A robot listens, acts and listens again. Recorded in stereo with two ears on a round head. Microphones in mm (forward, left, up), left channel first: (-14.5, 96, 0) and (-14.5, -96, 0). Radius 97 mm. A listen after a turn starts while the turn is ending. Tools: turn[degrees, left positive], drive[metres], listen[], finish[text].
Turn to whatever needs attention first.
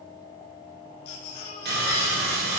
Thought: The baby crying: about 70° left or 110° left.
Action: turn[70]
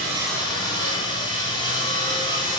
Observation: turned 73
Action: listen[]
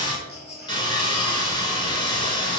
Action: finish[Facing the baby crying, 2 to 4 m away.]